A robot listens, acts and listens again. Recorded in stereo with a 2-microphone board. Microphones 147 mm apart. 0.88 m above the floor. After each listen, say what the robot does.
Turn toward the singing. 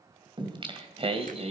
Turn 50° right.
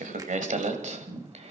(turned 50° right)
Turn 50° right.
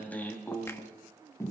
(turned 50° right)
Turn 20° left.
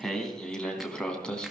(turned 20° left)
Found it: singing, straight ahead, 2 to 4 m away.